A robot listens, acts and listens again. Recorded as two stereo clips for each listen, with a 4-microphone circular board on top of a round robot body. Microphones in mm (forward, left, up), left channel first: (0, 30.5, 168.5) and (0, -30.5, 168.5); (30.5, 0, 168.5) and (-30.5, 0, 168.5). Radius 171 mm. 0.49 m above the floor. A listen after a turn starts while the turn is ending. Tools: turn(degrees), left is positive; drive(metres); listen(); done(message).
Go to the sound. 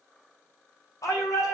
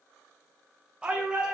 turn(degrees=110)
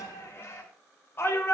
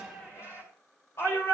turn(degrees=40)
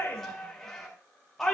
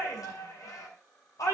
drive(metres=1.0)
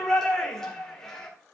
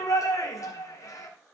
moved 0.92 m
drive(metres=1.0)
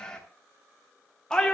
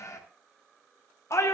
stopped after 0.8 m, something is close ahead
turn(degrees=15)
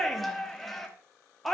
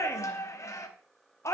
done("Arrived at the shout, straight ahead.")